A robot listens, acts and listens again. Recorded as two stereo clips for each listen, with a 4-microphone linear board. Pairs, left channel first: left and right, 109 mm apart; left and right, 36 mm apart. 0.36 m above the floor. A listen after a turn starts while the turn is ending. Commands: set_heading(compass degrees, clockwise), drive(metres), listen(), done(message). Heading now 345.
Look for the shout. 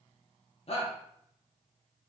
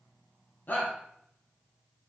set_heading(280)
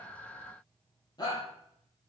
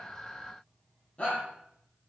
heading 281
set_heading(241)
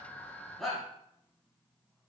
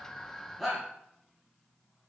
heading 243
done("Facing the shout.")